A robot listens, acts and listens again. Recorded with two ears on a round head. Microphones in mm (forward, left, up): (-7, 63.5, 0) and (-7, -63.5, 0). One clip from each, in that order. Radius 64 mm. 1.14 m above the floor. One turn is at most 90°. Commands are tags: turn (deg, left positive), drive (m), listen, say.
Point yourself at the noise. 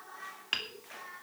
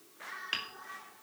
<turn deg="30"/>
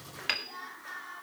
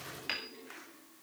<turn deg="90"/>
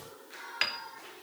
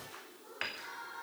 <turn deg="60"/>
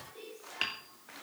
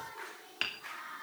<say>Facing the hammering, 2 to 4 m away.</say>